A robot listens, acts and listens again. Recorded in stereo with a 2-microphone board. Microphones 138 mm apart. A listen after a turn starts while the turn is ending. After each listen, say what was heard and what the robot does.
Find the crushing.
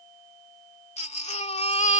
Keep listening.
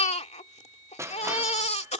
The crushing: about 20° right or 160° right. Turn 20° right.
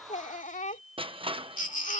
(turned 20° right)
So it is at 140° right. Turn 140° right.
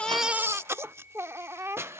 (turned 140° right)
The crushing is now 20° right. Turn 20° right.
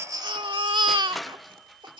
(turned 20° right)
Facing the crushing.